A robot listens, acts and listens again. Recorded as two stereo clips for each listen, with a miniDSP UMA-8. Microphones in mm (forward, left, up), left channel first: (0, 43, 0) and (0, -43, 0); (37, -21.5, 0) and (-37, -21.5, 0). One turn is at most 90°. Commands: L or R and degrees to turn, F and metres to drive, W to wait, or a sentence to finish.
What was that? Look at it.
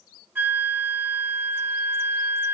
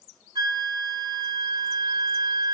R90
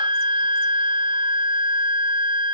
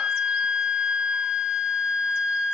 R90
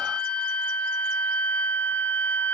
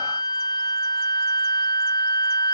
L15
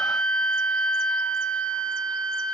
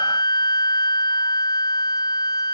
Found it: a flute, straight ahead.